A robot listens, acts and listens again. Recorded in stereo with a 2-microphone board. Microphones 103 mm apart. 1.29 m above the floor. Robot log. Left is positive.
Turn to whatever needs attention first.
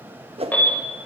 note: The alarm: about 15° left or 165° left.
cmd yaw +15
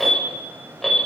end: Found it: an alarm, straight ahead.